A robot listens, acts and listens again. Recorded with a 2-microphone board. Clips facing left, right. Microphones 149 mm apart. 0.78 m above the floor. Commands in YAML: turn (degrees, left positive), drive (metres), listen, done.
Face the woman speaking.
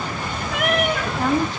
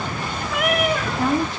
turn: -30
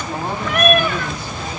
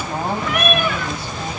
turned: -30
listen: true
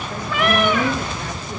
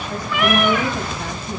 listen: true
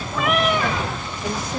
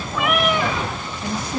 turn: -150
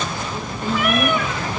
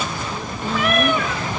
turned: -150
turn: 30
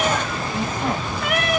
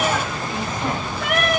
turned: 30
listen: true
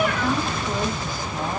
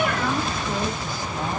listen: true
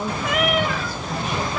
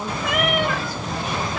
done: "Facing the woman speaking."